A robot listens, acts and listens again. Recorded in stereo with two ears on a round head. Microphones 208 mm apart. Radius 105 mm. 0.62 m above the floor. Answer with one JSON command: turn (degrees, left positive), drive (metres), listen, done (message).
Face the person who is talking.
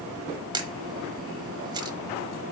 {"listen": true}
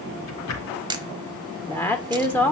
{"turn": 30}
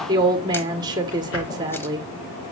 {"turn": -20}
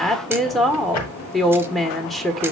{"done": "Found it: a woman speaking, straight ahead."}